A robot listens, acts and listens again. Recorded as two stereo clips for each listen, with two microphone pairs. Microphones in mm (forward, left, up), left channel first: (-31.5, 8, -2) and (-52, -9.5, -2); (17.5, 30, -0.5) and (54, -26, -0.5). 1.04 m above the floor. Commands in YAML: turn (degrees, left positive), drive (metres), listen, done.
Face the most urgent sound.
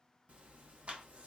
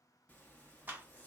listen: true
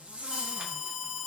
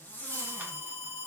turn: 140
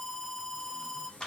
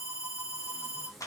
turn: -15
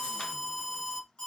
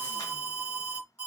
done: "Facing the alarm."